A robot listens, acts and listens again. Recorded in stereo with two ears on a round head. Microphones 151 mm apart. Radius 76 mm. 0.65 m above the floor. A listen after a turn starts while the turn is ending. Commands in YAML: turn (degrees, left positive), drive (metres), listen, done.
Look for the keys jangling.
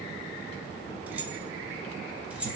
turn: -30
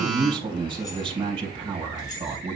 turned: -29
listen: true
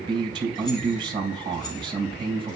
listen: true
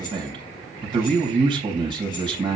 done: "I heard keys jangling, but can't make it out now. It was about 20° left or 145° right."